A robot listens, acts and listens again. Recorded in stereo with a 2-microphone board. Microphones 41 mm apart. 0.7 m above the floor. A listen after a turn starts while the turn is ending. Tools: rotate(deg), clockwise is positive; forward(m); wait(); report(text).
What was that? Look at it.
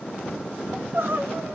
rotate(65)
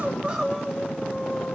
report("Facing the crying, 1 to 2 m away.")